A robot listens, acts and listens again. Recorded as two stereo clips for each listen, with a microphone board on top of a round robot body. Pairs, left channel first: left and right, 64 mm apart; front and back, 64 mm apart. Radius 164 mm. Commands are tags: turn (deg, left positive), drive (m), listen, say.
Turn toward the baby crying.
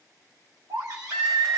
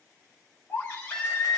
<turn deg="-55"/>
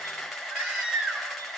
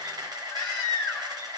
<turn deg="-25"/>
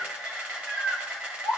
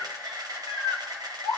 <say>Found it: a baby crying, straight ahead.</say>